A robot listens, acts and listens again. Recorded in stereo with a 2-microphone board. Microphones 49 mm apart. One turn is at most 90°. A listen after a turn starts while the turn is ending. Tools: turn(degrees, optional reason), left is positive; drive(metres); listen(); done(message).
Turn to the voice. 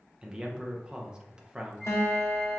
turn(degrees=-20, reason="The man speaking: about 20° right or 160° right.")
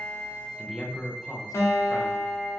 done("Facing the man speaking, under 1 m away.")